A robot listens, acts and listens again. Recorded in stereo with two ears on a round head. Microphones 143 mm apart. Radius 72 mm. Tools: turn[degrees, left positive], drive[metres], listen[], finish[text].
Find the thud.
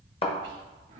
Thought: The thud: about 35° left or 145° left.
Action: turn[35]
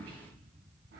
Action: listen[]
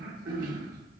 Action: finish[I heard a thud, but can't make it out now. It was about straight ahead or 110° left.]